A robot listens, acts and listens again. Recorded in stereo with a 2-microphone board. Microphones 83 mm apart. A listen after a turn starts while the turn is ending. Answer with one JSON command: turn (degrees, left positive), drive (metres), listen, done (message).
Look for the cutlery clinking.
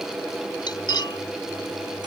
{"turn": 60}
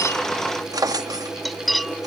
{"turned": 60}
{"done": "Found it: cutlery clinking, straight ahead."}